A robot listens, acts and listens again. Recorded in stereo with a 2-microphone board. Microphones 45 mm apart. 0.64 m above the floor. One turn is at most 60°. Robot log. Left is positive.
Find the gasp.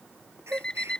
cmd yaw -60
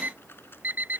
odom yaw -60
note: Nothing new. It was at 30° right.
cmd yaw -30
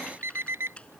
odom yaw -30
end: Facing where the gasp came from. I can't hear it now.